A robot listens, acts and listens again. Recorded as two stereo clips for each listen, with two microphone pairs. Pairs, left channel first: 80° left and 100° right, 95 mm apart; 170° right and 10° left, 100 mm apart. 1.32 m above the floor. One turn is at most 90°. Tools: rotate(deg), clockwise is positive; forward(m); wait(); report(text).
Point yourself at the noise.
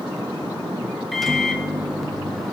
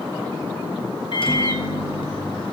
rotate(-90)
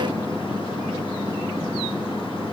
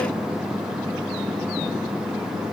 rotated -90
rotate(-75)
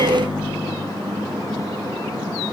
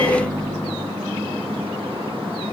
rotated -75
rotate(-25)
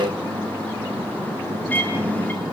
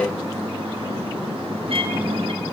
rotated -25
report("Facing the microwave.")